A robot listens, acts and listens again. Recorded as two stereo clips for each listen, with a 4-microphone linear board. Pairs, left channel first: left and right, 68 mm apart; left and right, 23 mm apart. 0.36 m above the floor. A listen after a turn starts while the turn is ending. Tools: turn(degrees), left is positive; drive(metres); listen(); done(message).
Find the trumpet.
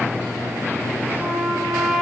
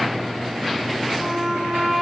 turn(degrees=30)
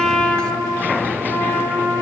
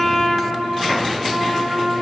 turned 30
turn(degrees=150)
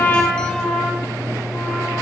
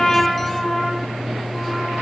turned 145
done("Found it: a trumpet, straight ahead, 2 to 4 m away.")